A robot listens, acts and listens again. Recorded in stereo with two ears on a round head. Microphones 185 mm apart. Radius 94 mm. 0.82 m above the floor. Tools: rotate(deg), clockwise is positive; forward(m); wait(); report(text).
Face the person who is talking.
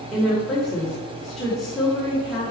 rotate(-30)
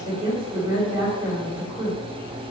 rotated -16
rotate(15)
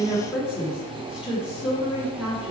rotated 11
report("Facing the woman speaking.")